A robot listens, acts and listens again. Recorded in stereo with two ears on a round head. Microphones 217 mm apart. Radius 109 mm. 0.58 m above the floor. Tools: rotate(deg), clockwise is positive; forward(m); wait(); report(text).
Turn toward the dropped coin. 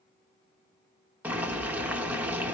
wait()
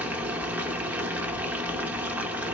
wait()
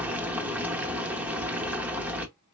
report("I can't make out a dropped coin, only boiling.")